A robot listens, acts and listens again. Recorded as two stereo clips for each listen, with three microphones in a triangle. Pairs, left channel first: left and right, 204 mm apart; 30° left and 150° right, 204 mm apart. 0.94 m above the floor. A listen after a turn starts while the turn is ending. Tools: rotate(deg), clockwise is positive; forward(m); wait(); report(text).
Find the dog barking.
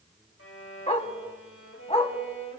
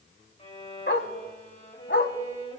rotate(-35)
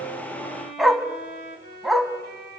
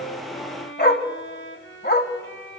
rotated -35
report("Found it: a dog barking, straight ahead.")